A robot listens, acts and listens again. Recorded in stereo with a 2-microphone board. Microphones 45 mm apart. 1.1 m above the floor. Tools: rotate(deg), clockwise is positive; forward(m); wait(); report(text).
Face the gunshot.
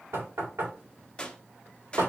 rotate(-20)
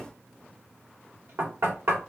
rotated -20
wait()
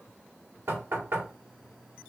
report("I heard a gunshot, but can't make it out now. It was about straight ahead or 140° left.")